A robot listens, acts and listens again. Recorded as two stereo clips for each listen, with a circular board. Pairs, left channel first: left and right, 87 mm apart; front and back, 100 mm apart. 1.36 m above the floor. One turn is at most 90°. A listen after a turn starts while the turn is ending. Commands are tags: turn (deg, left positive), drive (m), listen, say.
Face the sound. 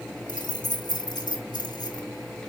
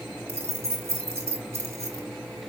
<turn deg="90"/>
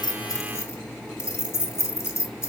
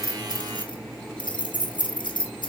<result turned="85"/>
<turn deg="30"/>
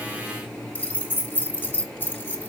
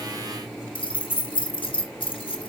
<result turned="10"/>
<turn deg="20"/>
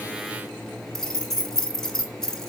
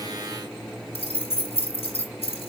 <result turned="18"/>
<say>Found it: keys jangling, straight ahead, 1 to 2 m away.</say>